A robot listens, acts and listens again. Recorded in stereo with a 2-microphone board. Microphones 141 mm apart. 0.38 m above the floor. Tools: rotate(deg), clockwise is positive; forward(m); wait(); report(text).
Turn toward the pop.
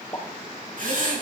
rotate(-25)
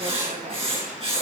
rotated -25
wait()
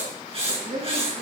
report("I heard a pop, but can't make it out now. It was about straight ahead or 130° left.")